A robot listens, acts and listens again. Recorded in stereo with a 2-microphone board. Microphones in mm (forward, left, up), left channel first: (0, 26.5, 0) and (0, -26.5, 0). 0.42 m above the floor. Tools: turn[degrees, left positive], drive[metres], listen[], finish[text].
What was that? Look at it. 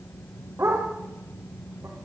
Thought: The dog barking: about 60° right or 120° right.
Action: turn[-60]
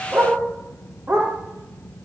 Thought: So it is at 55° right.
Action: turn[-55]
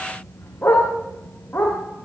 Thought: The dog barking is now 30° left.
Action: turn[30]
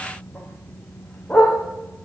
Action: finish[Facing the dog barking.]